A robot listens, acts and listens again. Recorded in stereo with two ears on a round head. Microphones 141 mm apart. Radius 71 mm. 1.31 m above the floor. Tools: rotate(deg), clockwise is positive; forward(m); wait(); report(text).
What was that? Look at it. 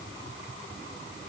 wait()
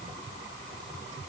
wait()
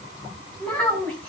rotate(-30)
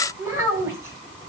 rotate(20)
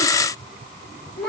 report("Found it: a child speaking, straight ahead.")